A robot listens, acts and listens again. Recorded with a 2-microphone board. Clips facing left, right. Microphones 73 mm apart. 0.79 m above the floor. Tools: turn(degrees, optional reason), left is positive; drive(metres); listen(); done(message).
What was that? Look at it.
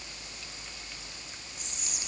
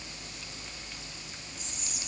turn(degrees=65, reason="The whispering: about 65° left or 115° left.")
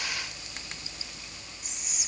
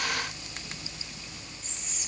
turn(degrees=15, reason="So it is at 15° left.")
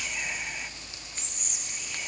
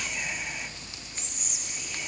done("Found it: whispering, straight ahead, 1 to 2 m away.")